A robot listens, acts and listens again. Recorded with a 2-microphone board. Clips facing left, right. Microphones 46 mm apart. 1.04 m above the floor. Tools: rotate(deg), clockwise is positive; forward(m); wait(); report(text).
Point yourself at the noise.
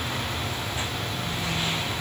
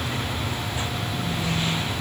wait()
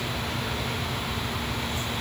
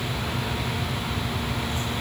wait()
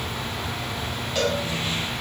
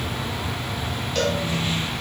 rotate(-30)
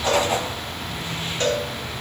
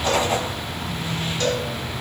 rotate(-145)
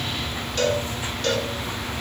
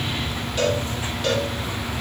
rotate(10)
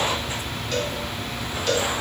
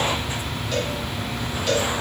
report("Found it: a cowbell, straight ahead, 1 to 2 m away.")